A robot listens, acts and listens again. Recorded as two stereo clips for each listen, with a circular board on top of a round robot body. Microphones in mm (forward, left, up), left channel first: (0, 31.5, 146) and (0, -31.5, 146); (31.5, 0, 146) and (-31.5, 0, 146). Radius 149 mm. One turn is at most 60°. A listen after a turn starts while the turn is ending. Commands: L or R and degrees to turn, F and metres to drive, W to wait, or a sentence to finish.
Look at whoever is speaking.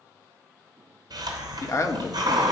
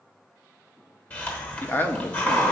L60
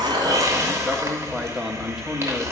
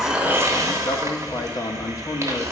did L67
Facing the man speaking, 1 to 2 m away.